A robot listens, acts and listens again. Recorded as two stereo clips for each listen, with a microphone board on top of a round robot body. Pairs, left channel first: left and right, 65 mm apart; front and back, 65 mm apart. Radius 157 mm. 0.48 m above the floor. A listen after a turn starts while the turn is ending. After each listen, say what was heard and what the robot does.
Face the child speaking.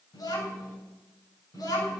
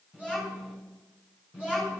The child speaking: 110° left. Turn 110° left.
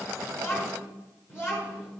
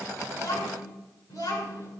The child speaking is now 40° left. Turn 40° left.
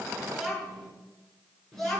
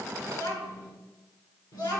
Found it: a child speaking, straight ahead, over 4 m away.